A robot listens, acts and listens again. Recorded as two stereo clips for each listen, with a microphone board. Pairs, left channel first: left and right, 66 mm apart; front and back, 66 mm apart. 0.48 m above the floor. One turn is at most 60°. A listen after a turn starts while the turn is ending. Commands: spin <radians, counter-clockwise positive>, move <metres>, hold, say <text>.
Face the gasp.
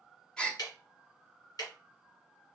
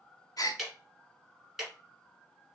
spin 0.26
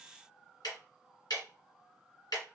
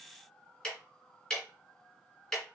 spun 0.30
say Facing where the gasp came from. I can't hear it now.